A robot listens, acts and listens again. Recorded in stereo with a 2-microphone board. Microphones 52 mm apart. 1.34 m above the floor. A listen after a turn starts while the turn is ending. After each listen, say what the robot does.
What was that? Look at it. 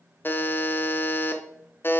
Turn 40° left.
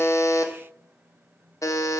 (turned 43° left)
Turn 95° left.
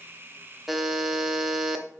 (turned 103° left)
Found it: a buzzer, straight ahead.